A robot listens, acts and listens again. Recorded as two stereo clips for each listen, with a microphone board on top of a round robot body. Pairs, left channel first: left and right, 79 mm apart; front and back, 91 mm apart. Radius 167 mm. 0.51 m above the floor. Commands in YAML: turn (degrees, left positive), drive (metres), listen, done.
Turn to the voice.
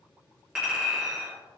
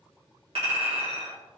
listen: true
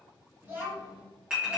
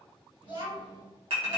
turn: -155
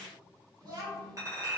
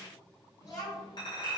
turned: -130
turn: -55
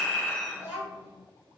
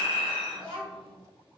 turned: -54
turn: -10
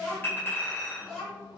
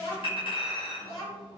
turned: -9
done: "Facing the child speaking."